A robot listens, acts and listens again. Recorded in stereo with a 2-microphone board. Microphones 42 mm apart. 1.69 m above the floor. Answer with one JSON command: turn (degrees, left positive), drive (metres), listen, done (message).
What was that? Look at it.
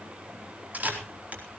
{"turn": -40}
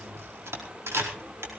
{"turn": -100}
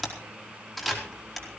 {"done": "Facing the camera shutter, over 4 m away."}